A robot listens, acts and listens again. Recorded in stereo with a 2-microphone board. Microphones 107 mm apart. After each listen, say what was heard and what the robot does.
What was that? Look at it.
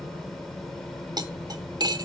The cutlery clinking: about 40° right or 140° right. Turn 40° right.
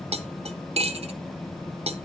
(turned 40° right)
So it is at 95° right. Turn 95° right.
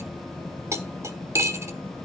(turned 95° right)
The cutlery clinking is now 25° right. Turn 25° right.
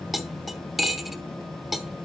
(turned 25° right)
Found it: cutlery clinking, straight ahead, under 1 m away.